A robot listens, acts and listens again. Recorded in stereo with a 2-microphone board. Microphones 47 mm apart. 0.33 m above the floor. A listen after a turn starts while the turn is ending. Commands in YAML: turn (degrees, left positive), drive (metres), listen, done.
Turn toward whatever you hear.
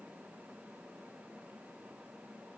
listen: true
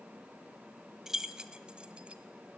turn: -15
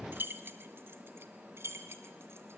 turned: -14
turn: -120
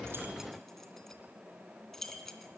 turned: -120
done: "Facing the keys jangling, 2 to 4 m away."